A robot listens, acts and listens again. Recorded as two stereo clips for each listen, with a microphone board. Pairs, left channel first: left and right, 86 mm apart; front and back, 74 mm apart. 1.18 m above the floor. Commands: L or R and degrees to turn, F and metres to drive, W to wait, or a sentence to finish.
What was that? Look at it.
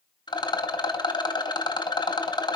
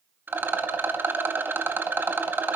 L120
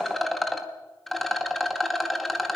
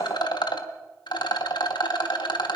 Found it: a rattle, straight ahead.